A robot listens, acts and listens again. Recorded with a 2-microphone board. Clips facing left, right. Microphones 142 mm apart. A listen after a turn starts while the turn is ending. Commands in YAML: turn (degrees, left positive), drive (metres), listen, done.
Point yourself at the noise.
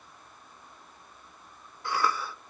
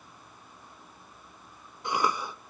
turn: -20
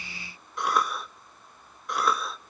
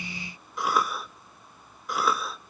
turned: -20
done: "Facing the cough."